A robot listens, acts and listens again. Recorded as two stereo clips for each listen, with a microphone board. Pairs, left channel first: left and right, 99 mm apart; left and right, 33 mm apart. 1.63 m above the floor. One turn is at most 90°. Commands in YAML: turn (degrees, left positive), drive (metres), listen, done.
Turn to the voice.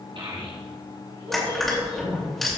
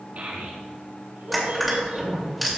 turn: -60
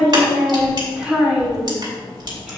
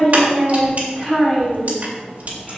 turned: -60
turn: -10
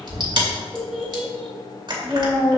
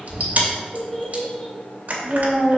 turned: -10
done: "Facing the child speaking, over 4 m away."